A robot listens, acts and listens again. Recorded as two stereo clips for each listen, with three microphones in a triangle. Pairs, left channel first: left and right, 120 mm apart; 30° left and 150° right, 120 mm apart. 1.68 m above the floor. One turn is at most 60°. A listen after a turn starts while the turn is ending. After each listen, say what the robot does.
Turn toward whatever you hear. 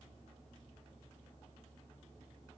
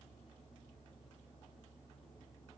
Keep listening.
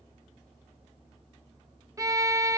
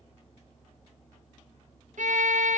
Turn 60° right.
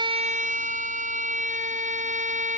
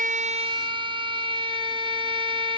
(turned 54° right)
Turn 60° right.
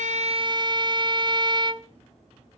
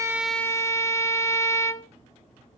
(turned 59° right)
Turn 40° right.
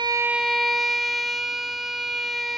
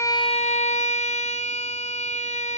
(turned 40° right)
Found it: a violin, straight ahead.